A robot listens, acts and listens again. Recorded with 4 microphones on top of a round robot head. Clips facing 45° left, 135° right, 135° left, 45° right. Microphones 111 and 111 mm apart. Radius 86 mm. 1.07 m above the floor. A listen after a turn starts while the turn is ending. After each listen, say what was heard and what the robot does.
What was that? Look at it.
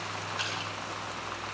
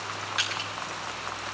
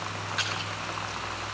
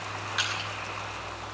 The crushing: 130° right. Turn 130° right.
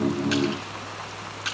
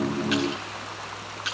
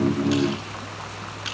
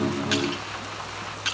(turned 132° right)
Facing the crushing.